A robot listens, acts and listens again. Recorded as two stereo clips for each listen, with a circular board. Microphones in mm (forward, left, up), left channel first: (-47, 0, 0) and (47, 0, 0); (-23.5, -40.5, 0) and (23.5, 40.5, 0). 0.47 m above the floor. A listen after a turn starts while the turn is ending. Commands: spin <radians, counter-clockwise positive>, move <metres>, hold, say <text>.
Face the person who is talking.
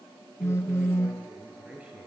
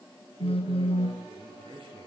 spin 1.31
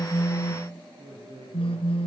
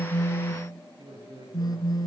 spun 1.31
spin 0.44
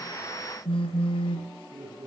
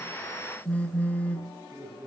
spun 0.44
say Found it: a man speaking, straight ahead, over 4 m away.